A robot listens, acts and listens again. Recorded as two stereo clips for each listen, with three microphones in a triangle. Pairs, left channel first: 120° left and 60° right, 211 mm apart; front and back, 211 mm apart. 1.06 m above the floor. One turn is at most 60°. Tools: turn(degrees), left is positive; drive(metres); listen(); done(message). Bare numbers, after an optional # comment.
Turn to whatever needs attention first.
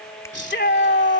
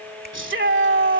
# The shout: 155° left.
turn(60)
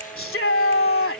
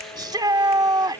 # The shout is now 110° left.
turn(60)
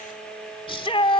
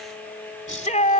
# The shout is now 55° left.
turn(55)
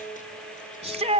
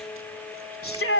done("Facing the shout.")